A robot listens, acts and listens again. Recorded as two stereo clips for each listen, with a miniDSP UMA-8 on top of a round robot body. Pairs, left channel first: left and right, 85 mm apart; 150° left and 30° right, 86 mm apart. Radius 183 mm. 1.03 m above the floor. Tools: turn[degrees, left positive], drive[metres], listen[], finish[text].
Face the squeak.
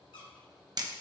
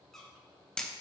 Thought: The squeak: 65° left.
Action: turn[65]
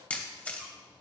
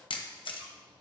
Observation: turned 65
Action: listen[]
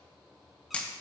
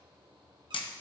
Action: listen[]
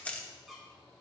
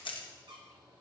Action: finish[Found it: a squeak, straight ahead, 1 to 2 m away.]